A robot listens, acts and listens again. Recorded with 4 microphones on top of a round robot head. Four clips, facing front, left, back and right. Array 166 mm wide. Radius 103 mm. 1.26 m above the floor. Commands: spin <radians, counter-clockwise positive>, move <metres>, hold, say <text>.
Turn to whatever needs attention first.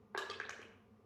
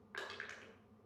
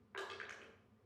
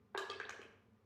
hold
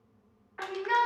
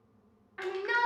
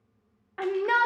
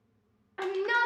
spin -2.79
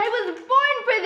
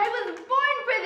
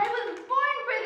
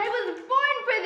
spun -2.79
say Found it: a shout, straight ahead, under 1 m away.